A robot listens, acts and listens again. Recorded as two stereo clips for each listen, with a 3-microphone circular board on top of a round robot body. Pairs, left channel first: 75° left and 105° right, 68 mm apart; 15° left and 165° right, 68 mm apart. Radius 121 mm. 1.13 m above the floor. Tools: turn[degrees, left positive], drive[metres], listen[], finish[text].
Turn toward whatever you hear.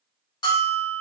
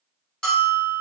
Thought: The bell: 95° left.
Action: turn[95]
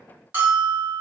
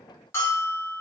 Thought: The bell is now 40° right.
Action: turn[-40]
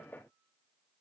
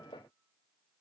Action: listen[]
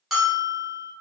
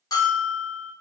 Thought: The bell is now 15° right.
Action: turn[-15]
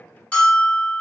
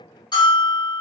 Action: finish[Found it: a bell, straight ahead, 1 to 2 m away.]